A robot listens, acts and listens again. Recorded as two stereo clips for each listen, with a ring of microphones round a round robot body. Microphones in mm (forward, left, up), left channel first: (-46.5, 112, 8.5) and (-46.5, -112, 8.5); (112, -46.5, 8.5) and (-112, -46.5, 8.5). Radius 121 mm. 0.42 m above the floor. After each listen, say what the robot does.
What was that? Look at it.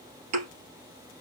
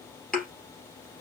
Turn 85° right.
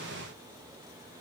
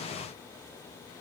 I heard a thud from this way, but can't make it out now.